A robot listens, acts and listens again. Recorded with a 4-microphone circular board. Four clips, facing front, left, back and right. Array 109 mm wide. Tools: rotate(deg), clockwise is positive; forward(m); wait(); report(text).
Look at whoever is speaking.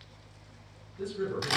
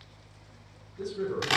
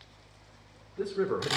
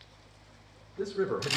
rotate(150)
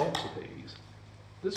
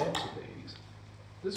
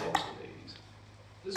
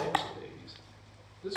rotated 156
rotate(-10)
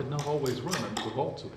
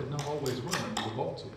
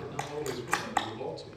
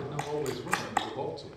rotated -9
report("Facing the man speaking.")